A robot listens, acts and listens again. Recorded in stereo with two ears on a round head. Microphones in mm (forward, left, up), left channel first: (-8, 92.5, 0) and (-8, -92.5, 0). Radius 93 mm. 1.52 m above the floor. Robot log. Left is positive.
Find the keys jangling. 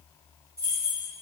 note: The keys jangling: about 15° right or 165° right.
cmd yaw -15
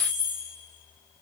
cmd yaw -30
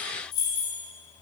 note: So it is at 20° left.
cmd yaw +20
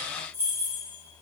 note: The keys jangling is now 15° right.
cmd yaw -15
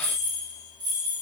note: The keys jangling is now 20° right.
cmd yaw -20
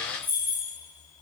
note: The keys jangling is now 10° right.
cmd yaw -10
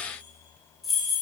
end: Facing the keys jangling.